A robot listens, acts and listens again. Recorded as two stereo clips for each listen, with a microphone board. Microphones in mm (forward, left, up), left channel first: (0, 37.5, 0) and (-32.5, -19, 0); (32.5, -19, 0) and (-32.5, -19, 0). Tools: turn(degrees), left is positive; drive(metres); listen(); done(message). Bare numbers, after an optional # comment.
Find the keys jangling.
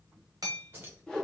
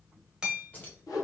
# The keys jangling: 60° right.
turn(-60)
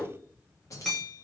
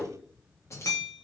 # The keys jangling is now 35° left.
turn(35)
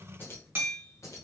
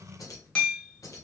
# The keys jangling is now 30° left.
turn(30)
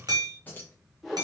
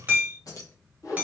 done("Found it: keys jangling, straight ahead, 1 to 2 m away.")